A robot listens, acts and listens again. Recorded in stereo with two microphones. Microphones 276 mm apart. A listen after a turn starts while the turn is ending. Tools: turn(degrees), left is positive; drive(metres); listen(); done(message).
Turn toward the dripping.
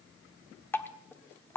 turn(degrees=30)
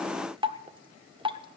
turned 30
turn(degrees=-20)
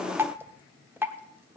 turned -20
turn(degrees=-10)
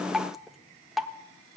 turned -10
done("Facing the dripping.")